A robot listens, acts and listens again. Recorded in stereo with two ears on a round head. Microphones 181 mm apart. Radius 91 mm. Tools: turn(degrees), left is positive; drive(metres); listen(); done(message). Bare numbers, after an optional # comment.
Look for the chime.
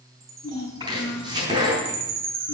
# The chime: about 65° right or 115° right.
turn(-65)
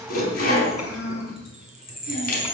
done("Facing the chime.")